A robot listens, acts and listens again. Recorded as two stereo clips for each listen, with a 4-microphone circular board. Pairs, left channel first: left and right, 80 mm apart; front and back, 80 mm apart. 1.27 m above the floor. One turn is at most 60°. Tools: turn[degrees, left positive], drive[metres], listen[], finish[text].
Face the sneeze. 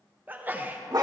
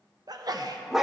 Thought: The sneeze: 155° right.
Action: turn[-60]
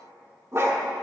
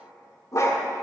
Thought: Nothing new. It was at 95° right.
Action: turn[-60]
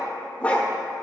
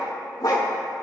Thought: Nothing new. It was at 35° right.
Action: turn[-35]
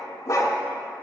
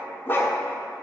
Action: finish[Facing where the sneeze came from. I can't hear it now.]